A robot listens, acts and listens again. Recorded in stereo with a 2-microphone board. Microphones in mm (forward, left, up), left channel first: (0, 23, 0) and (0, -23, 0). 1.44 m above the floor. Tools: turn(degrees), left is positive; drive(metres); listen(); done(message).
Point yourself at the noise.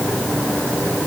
listen()
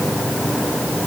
listen()
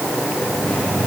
done("I can't make out anything to turn to.")